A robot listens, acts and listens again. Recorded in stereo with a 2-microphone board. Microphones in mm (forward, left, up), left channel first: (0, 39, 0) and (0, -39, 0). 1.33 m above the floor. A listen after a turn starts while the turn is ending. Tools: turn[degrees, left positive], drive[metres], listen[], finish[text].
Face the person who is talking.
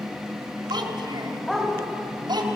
Thought: The child speaking: about 75° right or 105° right.
Action: turn[-75]
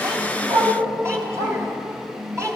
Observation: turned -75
Thought: So it is at 40° right.
Action: turn[-40]
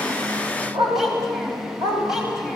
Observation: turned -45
Action: listen[]
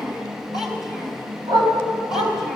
Action: finish[Found it: a child speaking, straight ahead, over 4 m away.]